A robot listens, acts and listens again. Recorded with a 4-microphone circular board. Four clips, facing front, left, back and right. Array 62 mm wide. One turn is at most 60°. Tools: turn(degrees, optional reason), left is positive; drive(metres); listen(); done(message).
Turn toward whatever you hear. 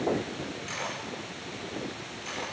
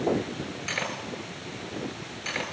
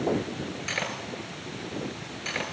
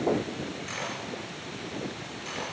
turn(degrees=60, reason="The cutlery clinking: 135° left.")
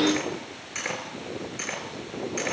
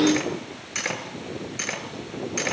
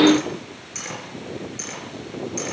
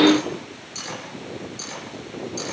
turn(degrees=60, reason="The cutlery clinking is now 70° left.")
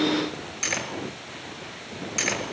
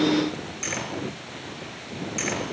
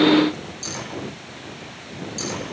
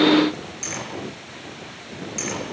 turn(degrees=10, reason="The cutlery clinking is now 10° left.")
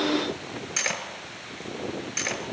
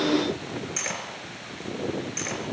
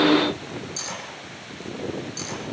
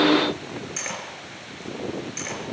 done("Facing the cutlery clinking, 2 to 4 m away.")